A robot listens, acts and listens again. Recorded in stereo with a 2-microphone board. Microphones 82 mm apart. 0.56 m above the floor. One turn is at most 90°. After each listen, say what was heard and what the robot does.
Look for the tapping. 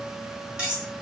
Keep listening.
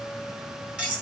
Keep listening.
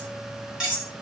I can't make out tapping to turn to.